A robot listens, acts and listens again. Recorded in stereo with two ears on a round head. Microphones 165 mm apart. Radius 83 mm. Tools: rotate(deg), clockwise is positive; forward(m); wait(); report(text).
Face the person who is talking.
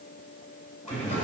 rotate(-30)
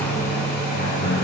rotate(-125)
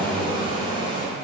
rotate(20)
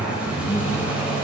report("Found it: a man speaking, straight ahead.")